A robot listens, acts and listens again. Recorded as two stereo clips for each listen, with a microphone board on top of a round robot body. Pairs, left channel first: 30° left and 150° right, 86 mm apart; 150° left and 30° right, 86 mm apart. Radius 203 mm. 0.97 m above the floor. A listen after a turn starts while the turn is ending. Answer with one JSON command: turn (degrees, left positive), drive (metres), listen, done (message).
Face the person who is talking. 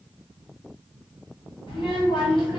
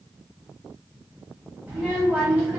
{"turn": 40}
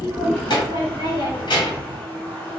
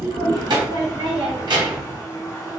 {"done": "Facing the child speaking."}